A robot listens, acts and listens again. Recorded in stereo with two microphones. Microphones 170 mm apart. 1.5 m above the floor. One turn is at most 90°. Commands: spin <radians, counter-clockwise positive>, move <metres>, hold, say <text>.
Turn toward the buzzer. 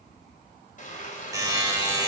spin -0.35
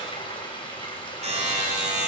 spin -1.57
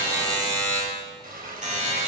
spin -0.79
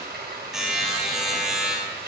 say Found it: a buzzer, straight ahead.